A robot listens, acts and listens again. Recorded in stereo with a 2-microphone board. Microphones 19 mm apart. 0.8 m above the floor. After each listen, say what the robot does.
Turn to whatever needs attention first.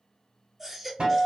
Turn 20° right.
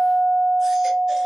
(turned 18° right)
Keep listening.
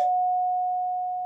Keep listening.
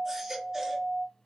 Turn 145° right.
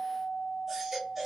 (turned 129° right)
Turn 15° right.
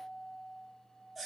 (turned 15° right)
Facing the baby crying.